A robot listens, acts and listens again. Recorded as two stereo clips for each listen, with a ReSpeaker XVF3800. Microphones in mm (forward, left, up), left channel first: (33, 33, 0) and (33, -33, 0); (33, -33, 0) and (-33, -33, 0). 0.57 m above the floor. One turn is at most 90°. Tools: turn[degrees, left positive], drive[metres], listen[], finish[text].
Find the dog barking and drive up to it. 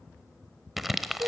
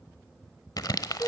Action: listen[]
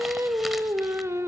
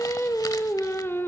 Action: listen[]
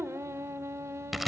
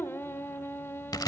Action: finish[I can't make out a dog barking, only singing and crumpling.]